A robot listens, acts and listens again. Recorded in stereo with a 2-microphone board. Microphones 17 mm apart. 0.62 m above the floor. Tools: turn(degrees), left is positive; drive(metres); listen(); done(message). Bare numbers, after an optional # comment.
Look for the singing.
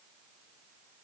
listen()
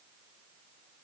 listen()
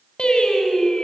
# The singing: about 70° left or 110° left.
turn(70)
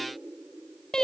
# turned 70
# So it is at 40° left.
turn(40)
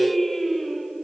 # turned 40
done("Found it: singing, straight ahead, 2 to 4 m away.")